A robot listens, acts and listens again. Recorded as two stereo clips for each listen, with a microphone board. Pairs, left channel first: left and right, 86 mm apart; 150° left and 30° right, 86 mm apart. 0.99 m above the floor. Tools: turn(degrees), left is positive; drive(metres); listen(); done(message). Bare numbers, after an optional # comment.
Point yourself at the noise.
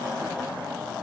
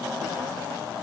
listen()
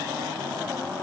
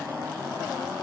listen()
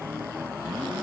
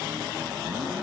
done("I can't make out anything to turn to.")